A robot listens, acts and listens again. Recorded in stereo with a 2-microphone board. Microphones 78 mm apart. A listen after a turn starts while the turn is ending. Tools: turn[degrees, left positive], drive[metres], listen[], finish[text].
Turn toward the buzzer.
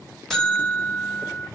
Action: turn[30]
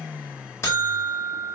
Thought: So it is at 145° left.
Action: turn[145]
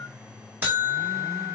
Thought: The buzzer is now 25° right.
Action: turn[-25]
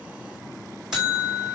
Thought: The buzzer is now 10° right.
Action: turn[-10]
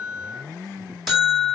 Action: finish[Facing the buzzer, over 4 m away.]